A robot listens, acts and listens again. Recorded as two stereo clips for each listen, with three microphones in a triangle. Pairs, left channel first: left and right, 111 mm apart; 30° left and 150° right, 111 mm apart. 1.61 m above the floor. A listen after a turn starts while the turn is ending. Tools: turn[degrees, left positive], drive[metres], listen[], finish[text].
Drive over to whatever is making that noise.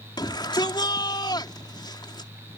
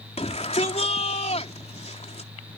Thought: The shout: 40° left.
Action: turn[40]
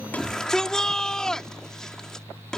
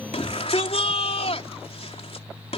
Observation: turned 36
Action: drive[1.0]
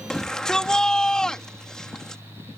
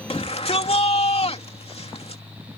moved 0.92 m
Action: drive[1.0]
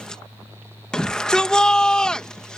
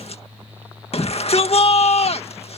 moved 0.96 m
Action: drive[1.0]
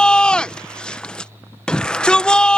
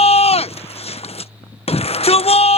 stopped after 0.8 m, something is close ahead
Thought: The shout is now 10° left.
Action: turn[10]
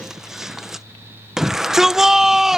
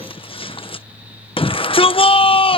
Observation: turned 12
Action: finish[Arrived at the shout, straight ahead.]